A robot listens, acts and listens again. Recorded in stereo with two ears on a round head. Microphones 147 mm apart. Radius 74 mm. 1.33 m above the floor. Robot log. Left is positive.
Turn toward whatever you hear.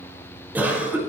cmd yaw -30
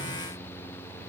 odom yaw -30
cmd idle
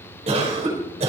note: So it is at 140° right.
cmd yaw -140
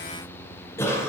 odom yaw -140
note: The cough is now 15° left.
cmd yaw +15
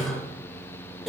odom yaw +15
end: Facing the cough.